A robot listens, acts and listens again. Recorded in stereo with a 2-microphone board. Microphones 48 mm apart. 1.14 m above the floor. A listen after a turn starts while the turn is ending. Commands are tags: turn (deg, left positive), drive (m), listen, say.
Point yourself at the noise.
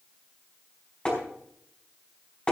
<turn deg="20"/>
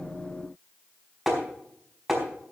<say>Found it: tapping, straight ahead.</say>